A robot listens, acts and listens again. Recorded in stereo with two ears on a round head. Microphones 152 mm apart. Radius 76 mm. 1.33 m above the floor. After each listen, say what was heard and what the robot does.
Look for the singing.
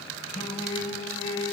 The singing: about 40° left or 140° left. Turn 40° left.
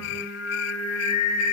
So it is at 105° left. Turn 105° left.
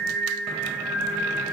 Facing the singing.